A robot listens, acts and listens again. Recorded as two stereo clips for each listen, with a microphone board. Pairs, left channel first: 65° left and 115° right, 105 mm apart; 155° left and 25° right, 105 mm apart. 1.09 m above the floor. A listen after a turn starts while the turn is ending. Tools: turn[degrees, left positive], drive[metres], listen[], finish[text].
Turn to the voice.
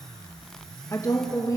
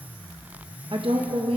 Thought: The woman speaking: 10° left.
Action: turn[10]
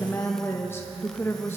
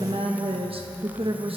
Action: finish[Found it: a woman speaking, straight ahead.]